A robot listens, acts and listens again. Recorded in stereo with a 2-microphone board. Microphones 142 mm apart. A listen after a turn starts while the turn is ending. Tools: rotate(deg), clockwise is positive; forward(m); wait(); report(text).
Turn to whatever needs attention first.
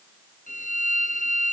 wait()
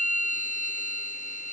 wait()
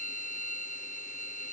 report("I can't make out anything urgent, only a violin.")